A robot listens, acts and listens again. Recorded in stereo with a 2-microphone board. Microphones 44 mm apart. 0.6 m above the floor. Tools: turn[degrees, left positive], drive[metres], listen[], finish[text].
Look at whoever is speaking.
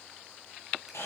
Action: listen[]
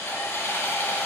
Action: listen[]
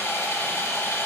Action: finish[I can't make out anyone speaking, only sawing.]